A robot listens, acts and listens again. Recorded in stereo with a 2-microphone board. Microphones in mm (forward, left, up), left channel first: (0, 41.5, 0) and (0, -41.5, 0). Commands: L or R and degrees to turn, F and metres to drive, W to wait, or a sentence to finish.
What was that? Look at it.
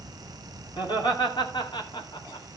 L65
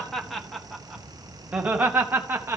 R30
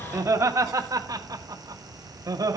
R40
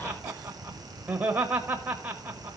R20
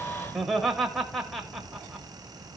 Found it: laughter, straight ahead, 1 to 2 m away.